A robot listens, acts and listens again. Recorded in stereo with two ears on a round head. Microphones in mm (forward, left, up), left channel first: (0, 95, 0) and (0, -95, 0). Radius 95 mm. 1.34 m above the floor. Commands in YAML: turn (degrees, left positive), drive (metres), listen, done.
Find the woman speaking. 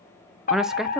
turn: -30
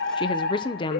turn: 25
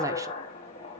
listen: true
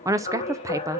turn: -15
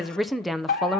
done: "Found it: a woman speaking, straight ahead."